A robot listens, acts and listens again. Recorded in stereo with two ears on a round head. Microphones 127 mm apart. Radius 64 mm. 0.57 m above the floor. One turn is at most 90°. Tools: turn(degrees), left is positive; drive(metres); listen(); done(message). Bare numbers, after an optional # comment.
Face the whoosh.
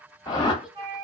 # The whoosh: about 30° left or 150° left.
turn(30)
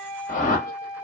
# So it is at 120° left.
turn(90)
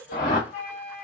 # The whoosh is now 55° left.
turn(55)
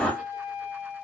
done("Facing the whoosh, under 1 m away.")